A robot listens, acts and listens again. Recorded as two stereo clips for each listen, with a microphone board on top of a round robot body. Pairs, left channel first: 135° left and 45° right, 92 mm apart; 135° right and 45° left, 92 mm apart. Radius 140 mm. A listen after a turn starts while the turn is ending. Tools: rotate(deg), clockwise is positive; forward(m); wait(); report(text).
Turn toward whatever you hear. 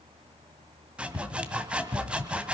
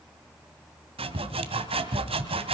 rotate(-35)
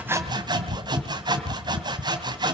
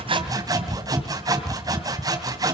report("Facing the sawing, 2 to 4 m away.")